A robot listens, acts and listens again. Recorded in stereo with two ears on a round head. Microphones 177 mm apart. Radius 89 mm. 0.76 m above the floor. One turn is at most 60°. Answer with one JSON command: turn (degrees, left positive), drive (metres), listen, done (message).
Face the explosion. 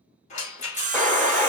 {"turn": 30}
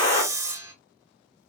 {"turn": 60}
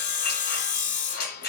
{"turn": 60}
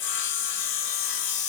{"turn": 30}
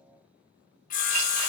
{"done": "Facing where the explosion came from. I can't hear it now."}